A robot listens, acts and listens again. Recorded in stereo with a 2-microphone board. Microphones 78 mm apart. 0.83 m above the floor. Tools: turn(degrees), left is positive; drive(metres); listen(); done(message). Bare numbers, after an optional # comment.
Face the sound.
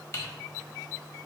# The typing on a keyboard: about 35° left or 145° left.
turn(35)
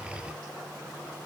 listen()
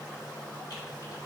listen()
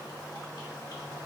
done("I heard typing on a keyboard, but can't make it out now. It was about straight ahead or 110° left.")